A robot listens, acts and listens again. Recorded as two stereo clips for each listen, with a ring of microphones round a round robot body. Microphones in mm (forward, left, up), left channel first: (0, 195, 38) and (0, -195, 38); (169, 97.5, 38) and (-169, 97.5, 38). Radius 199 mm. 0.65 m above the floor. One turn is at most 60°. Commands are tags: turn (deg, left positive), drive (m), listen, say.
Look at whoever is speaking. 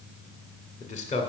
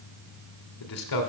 <turn deg="15"/>
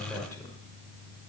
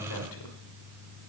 <turn deg="10"/>
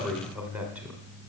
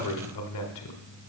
<say>Facing the man speaking, 1 to 2 m away.</say>